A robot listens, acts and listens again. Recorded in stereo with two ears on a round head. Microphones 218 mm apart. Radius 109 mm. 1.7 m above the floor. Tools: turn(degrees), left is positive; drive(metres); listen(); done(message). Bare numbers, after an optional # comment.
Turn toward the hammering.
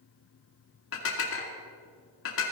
listen()
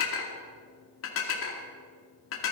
listen()
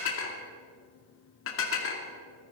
done("I can't make out hammering to turn to.")